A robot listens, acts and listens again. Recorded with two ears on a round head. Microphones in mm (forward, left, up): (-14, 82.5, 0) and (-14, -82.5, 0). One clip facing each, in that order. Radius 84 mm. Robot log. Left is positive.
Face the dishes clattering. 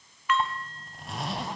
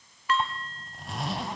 note: The dishes clattering: about 30° right or 150° right.
cmd yaw -30
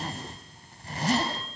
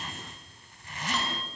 cmd idle
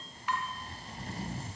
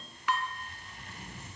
note: So it is at 115° right.
cmd yaw -115
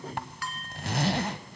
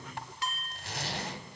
note: The dishes clattering is now 20° right.
cmd yaw -20
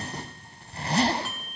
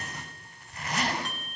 end: Facing the dishes clattering.